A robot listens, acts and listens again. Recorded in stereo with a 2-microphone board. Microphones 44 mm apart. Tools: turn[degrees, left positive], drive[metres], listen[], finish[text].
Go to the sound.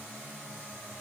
Action: listen[]
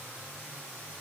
Action: listen[]
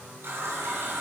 Thought: The running tap: about 60° right or 120° right.
Action: turn[-60]
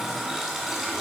Action: drive[1.0]
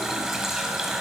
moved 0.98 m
Thought: The running tap is now 10° right.
Action: turn[-10]
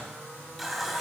Action: drive[1.0]
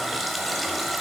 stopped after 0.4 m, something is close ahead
Action: finish[I am next to the running tap.]